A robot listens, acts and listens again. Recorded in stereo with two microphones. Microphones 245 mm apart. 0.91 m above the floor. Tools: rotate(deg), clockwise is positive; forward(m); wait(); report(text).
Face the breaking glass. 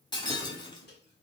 rotate(-20)
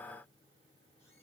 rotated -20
wait()
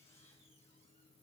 report("I heard breaking glass, but can't make it out now. It was about straight ahead or 140° left.")